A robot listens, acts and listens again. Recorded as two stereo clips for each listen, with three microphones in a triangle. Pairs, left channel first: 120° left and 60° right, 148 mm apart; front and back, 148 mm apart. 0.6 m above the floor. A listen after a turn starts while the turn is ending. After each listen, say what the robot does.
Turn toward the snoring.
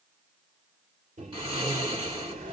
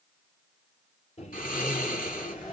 Found it: snoring, straight ahead, 1 to 2 m away.